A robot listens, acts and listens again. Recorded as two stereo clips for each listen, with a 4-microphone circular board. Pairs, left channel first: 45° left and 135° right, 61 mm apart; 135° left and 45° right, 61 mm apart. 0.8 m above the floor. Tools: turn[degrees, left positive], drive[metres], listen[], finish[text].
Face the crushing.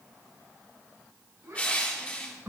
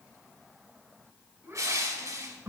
Thought: The crushing: 20° right.
Action: turn[-20]
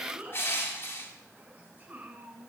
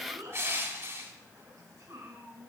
Action: finish[Facing the crushing, 1 to 2 m away.]